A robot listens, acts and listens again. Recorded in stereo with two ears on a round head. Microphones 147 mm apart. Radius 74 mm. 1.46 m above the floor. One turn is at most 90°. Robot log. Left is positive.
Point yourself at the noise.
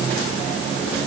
cmd idle
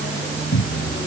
cmd yaw +90
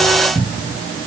note: So it is at 10° right.
cmd yaw -10
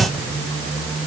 end: Facing the cupboard door.